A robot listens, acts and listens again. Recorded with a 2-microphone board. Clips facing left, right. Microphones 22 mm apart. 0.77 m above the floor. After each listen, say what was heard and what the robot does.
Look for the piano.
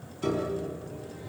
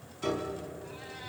Turn 30° right.
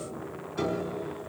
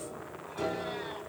So it is at 25° left. Turn 25° left.
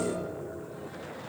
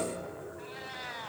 Found it: a piano, straight ahead, 2 to 4 m away.